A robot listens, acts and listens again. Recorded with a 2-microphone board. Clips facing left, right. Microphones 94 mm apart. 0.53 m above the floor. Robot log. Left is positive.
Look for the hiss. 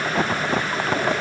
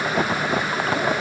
cmd idle
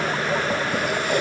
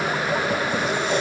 cmd idle
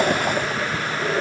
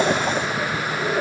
end: I can't make out a hiss.